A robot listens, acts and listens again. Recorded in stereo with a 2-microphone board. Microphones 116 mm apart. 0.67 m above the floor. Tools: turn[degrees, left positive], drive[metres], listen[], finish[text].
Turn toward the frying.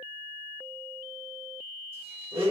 Action: listen[]
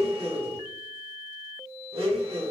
Action: listen[]
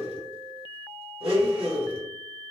Action: finish[I can't make out frying to turn to.]